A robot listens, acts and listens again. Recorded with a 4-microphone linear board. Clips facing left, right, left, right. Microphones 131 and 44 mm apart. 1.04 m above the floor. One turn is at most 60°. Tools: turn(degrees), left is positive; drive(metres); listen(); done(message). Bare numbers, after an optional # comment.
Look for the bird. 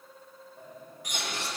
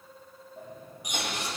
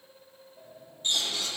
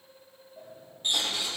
# The bird: about 15° right or 165° right.
turn(-15)
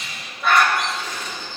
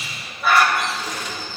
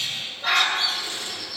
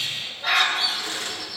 done("Facing the bird.")